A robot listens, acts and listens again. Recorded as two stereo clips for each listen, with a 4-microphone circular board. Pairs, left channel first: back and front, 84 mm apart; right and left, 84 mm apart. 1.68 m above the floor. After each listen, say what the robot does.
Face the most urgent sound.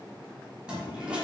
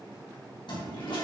Keep listening.
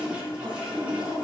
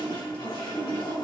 Keep listening.
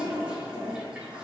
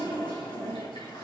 I can't make out anything urgent, only a toilet flushing.